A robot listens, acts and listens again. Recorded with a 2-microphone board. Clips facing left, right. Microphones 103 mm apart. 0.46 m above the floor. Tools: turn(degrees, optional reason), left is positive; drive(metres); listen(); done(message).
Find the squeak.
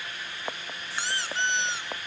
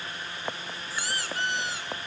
turn(degrees=25, reason="The squeak: about 25° left or 155° left.")
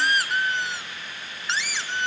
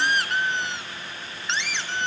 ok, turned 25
done("Facing the squeak.")